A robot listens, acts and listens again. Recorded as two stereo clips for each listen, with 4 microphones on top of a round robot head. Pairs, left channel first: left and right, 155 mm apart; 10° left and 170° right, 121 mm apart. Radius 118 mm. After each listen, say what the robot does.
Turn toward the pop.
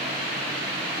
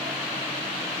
Keep listening.
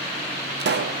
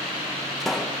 Turn 80° right.
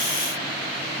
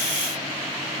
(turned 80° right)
Facing where the pop came from. I can't hear it now.